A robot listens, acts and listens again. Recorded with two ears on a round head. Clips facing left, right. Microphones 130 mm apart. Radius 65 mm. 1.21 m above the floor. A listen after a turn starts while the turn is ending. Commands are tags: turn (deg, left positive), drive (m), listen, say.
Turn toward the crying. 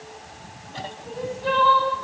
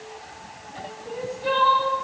<turn deg="-30"/>
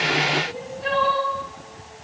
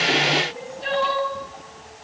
<turn deg="-135"/>
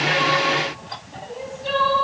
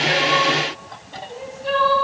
<say>Facing the crying, 2 to 4 m away.</say>